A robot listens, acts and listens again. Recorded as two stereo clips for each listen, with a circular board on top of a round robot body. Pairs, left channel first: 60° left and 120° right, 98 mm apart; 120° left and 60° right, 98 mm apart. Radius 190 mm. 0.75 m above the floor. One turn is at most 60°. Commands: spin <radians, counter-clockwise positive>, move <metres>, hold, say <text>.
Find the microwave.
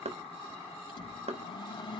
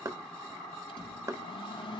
spin 1.05
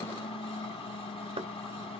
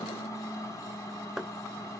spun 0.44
spin 1.05
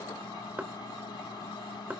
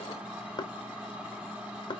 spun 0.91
spin 0.26
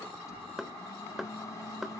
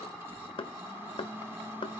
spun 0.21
say Facing the microwave.